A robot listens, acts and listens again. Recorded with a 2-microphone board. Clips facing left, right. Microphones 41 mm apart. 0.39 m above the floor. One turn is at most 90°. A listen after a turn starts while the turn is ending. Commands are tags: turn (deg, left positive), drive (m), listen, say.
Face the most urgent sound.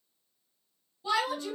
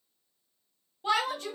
<turn deg="-65"/>
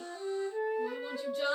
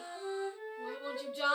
<turn deg="-30"/>
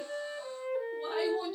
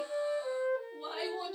<listen/>
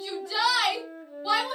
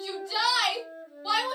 <say>Facing the shout, 1 to 2 m away.</say>